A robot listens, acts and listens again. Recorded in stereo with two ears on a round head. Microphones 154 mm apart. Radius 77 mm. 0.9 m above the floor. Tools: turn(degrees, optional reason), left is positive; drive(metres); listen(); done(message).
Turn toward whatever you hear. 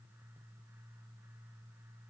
listen()
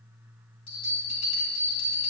turn(degrees=35, reason="The bell: about 35° left or 145° left.")
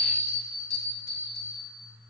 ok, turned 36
turn(degrees=110, reason="So it is at 110° left.")
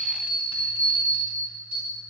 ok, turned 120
turn(degrees=-10, reason="The bell is now 10° right.")
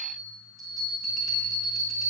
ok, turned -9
done("Found it: a bell, straight ahead.")